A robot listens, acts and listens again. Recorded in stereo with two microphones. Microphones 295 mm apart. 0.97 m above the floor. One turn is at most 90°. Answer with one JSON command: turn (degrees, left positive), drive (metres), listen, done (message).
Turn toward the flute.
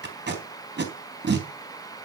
{"listen": true}
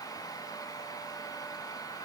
{"listen": true}
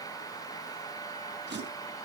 {"done": "I can't make out a flute, only tape being pulled."}